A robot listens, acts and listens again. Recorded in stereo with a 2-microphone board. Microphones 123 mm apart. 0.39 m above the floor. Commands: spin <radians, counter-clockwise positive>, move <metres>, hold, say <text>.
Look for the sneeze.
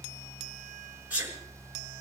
spin -0.52
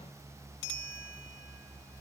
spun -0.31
hold
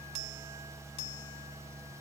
say I heard a sneeze, but can't make it out now. It was about 10° left or 150° right.